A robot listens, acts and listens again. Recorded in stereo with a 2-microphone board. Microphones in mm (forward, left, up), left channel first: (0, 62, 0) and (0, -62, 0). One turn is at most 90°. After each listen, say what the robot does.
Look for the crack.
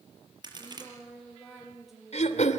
Turn 35° right.
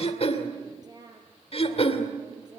Keep listening.
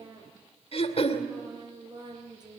I heard a crack, but can't make it out now. It was about straight ahead or 110° right.